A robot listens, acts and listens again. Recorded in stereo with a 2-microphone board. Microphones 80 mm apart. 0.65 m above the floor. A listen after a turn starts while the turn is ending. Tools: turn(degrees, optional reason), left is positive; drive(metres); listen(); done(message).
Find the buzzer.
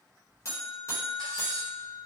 turn(degrees=40, reason="The buzzer: about 40° left or 140° left.")
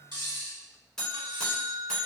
done("Facing the buzzer.")